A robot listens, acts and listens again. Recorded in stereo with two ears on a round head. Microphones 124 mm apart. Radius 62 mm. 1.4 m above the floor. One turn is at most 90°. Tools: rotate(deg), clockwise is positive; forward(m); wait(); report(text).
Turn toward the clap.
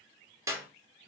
rotate(20)
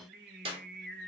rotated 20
rotate(90)
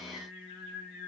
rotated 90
rotate(50)
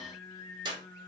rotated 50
rotate(30)
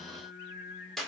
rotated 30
report("Found it: a clap, straight ahead, 1 to 2 m away.")